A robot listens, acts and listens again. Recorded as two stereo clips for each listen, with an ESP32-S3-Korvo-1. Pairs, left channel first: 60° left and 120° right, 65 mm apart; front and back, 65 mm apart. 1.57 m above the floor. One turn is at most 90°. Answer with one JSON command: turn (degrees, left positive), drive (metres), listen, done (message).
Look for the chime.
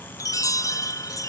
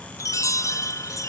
{"turn": 30}
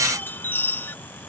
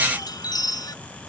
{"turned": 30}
{"done": "Found it: a chime, straight ahead."}